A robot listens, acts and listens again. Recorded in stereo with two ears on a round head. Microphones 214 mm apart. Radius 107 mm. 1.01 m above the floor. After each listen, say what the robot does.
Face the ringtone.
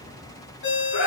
Turn 45° left.
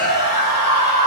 Keep listening.
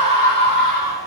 Keep listening.
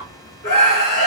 I heard a ringtone, but can't make it out now. It was about straight ahead or 90° left.